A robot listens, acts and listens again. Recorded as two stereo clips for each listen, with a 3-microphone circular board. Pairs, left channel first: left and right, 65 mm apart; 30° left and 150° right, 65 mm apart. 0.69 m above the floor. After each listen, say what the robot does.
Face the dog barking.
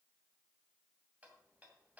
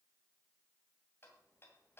Keep listening.
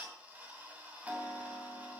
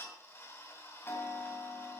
Keep listening.
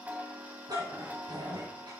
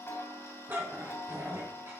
Turn 95° right.
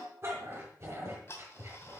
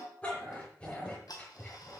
Turn 40° right.
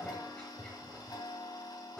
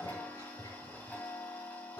Turn 15° left.
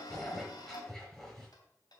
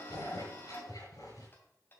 Facing the dog barking, over 4 m away.